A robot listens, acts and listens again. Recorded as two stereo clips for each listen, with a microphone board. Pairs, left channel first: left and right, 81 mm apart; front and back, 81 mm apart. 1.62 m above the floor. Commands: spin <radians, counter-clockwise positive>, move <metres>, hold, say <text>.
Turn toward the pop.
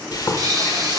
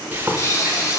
spin -0.87
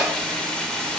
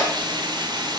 say Facing where the pop came from. I can't hear it now.